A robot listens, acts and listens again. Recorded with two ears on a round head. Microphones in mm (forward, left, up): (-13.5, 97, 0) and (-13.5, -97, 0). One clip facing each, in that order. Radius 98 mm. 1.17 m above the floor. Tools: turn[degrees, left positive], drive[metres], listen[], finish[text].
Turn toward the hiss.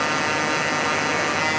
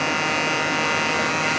Action: listen[]
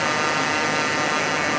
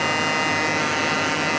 Action: listen[]
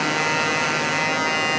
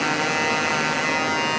Action: finish[I can't make out a hiss to turn to.]